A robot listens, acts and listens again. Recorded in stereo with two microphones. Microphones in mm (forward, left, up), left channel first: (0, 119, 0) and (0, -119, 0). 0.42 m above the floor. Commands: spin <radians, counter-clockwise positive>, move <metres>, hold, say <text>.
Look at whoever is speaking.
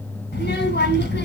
spin 0.79
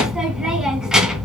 say Found it: a child speaking, straight ahead, 2 to 4 m away.